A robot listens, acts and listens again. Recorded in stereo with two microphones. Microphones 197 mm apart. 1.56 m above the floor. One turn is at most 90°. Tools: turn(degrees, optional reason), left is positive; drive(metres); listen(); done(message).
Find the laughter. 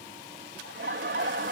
turn(degrees=-90)
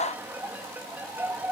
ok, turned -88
turn(degrees=-10, reason="So it is at 10° right.")
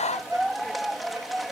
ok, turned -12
done("Facing the laughter.")